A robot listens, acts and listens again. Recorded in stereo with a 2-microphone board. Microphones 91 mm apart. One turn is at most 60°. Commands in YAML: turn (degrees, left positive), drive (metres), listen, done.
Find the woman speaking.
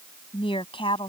turn: 60
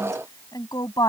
turn: 50
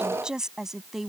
done: "Found it: a woman speaking, straight ahead."